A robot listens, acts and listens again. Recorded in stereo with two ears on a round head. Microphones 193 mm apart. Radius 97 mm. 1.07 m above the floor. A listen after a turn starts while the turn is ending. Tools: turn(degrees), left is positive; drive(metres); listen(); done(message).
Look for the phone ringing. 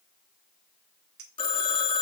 turn(degrees=25)
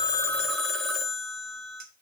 done("Facing the phone ringing.")